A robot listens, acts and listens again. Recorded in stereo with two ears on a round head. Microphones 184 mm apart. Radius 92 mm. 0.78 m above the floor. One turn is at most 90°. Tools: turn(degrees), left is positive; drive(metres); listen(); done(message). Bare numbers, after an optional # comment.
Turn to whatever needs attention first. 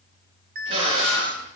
# The alarm: about 45° right or 135° right.
turn(-45)
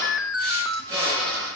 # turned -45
done("Found it: an alarm, straight ahead.")